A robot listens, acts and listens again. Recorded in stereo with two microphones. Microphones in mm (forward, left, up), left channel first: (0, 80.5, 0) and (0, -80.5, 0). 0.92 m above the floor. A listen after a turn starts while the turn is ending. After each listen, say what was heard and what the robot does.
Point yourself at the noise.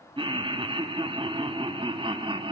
The laughter: about 30° right or 150° right. Turn 30° right.
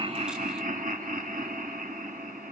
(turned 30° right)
So it is at 115° right. Turn 115° right.
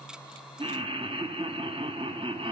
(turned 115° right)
The laughter is now 35° right. Turn 35° right.
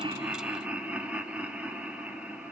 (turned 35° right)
The laughter is now 10° right. Turn 10° right.
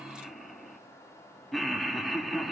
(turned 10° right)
Found it: laughter, straight ahead.